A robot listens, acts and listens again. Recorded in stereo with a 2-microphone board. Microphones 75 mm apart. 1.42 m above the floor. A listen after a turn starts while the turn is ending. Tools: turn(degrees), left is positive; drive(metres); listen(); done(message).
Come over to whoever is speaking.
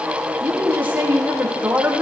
turn(degrees=-25)
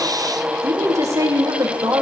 turn(degrees=-135)
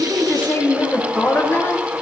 turn(degrees=30)
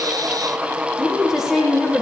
drive(metres=1.0)
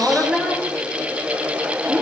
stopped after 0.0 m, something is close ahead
turn(degrees=-15)
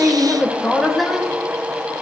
done("Blocked. The woman speaking is further on, straight ahead.")